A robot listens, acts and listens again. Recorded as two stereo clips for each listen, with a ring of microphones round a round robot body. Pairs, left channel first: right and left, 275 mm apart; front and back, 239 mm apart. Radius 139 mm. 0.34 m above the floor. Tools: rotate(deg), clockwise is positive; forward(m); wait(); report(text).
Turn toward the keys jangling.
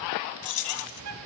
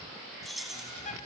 rotate(90)
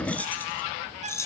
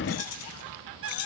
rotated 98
rotate(10)
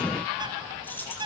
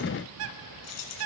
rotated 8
report("Facing the keys jangling.")